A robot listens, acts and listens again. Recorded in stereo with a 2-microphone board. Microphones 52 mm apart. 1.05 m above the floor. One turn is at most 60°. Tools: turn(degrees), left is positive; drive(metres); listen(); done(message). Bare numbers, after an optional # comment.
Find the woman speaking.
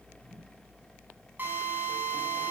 listen()
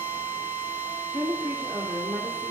# The woman speaking: about 35° right or 145° right.
turn(-35)
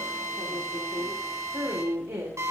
# So it is at 95° right.
turn(-60)
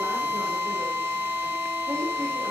# Nothing new. It was at 35° right.
turn(-35)
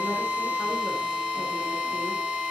listen()
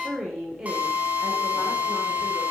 # The woman speaking is now 15° right.
turn(-15)
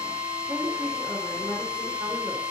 done("Found it: a woman speaking, straight ahead, 2 to 4 m away.")